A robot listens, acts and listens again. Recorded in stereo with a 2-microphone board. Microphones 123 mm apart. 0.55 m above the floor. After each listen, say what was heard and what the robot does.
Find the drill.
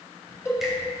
Keep listening.
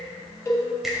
Keep listening.
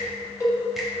I can't make out a drill to turn to.